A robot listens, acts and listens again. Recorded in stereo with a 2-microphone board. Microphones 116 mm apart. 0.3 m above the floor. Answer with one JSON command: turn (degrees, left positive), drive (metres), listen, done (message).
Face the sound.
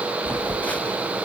{"turn": 30}
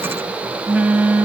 {"turn": -15}
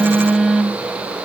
{"done": "Found it: a phone buzzing, straight ahead, under 1 m away."}